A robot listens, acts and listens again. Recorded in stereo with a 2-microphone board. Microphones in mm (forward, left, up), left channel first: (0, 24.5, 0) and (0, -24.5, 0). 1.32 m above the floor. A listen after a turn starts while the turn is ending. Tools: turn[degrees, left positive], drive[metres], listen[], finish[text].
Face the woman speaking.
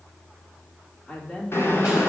Thought: The woman speaking: about 15° left or 165° left.
Action: turn[15]
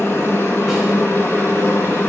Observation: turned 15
Action: listen[]
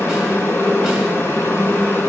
Action: listen[]
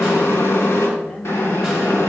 Thought: So it is at 145° left.
Action: turn[145]
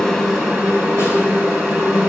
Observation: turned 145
Action: listen[]
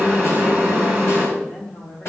Thought: The woman speaking is now 25° left.
Action: turn[25]
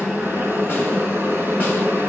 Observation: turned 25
Action: listen[]
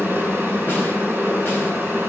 Action: listen[]
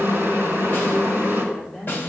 Action: finish[Facing the woman speaking.]